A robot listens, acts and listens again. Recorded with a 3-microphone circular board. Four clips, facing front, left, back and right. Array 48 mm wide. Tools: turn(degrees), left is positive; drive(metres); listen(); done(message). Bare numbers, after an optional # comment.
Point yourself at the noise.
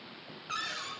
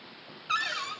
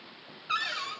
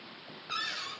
# The cupboard door: 120° left.
turn(120)
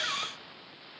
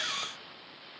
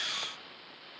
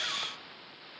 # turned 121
listen()
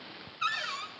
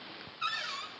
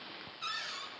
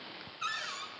done("Facing the cupboard door.")